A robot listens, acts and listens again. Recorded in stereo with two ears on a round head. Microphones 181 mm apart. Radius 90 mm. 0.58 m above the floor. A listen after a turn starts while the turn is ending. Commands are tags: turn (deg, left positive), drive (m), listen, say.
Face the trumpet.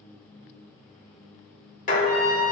<turn deg="-90"/>
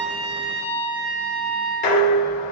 <turn deg="-10"/>
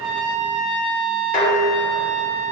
<say>Facing the trumpet, under 1 m away.</say>